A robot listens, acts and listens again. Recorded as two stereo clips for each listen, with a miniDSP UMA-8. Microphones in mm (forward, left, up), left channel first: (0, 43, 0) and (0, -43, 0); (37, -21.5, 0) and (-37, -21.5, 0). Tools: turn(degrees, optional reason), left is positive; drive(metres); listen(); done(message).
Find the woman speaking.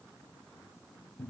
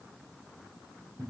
listen()
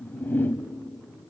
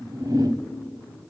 listen()
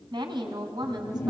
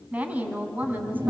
turn(degrees=-115, reason="The woman speaking: 115° right.")
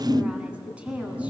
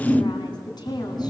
turn(degrees=-15, reason="The woman speaking is now 15° right.")
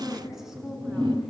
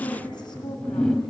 done("Found it: a woman speaking, straight ahead, 2 to 4 m away.")